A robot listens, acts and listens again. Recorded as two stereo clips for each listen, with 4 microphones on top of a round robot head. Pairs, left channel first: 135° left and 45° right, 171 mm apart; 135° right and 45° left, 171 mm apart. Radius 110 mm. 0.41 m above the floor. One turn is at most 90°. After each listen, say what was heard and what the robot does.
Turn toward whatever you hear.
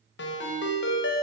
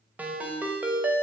The ringtone: 130° left. Turn 90° left.
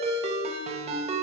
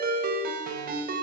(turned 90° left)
The ringtone is now 10° left. Turn 10° left.
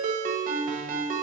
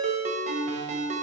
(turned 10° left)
Facing the ringtone, 1 to 2 m away.